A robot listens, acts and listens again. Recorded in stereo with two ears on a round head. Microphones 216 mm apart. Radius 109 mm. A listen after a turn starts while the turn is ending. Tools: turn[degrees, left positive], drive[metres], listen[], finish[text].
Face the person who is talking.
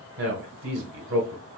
Thought: The man speaking: about 55° right or 125° right.
Action: turn[-55]
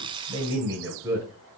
Thought: So it is at 10° right.
Action: turn[-10]
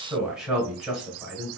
Action: finish[Facing the man speaking, 1 to 2 m away.]